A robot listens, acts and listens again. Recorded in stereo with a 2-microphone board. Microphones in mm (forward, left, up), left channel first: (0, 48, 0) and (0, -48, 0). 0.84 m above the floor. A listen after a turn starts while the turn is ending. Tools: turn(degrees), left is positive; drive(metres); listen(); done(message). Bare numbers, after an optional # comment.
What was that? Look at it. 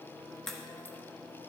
turn(30)
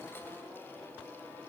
listen()
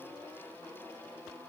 done("I heard a crack, but can't make it out now. It was about 25° right or 145° left.")